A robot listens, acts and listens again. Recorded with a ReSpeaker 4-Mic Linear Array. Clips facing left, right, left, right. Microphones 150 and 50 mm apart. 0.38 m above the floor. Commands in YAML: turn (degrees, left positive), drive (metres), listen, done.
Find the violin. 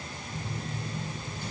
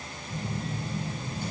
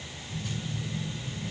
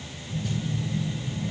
listen: true
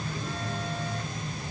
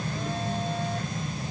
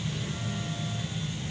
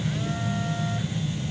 listen: true
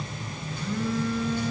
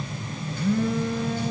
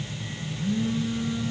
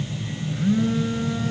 done: "I can't make out a violin, only a phone buzzing."